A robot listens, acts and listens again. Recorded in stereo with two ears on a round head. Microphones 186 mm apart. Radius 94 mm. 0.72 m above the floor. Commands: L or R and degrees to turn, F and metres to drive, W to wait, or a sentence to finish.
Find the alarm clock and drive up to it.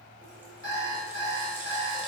L70
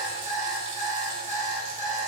F1.0
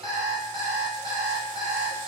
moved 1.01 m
F1.0
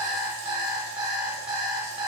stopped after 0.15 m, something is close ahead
Arrived at the alarm clock, straight ahead.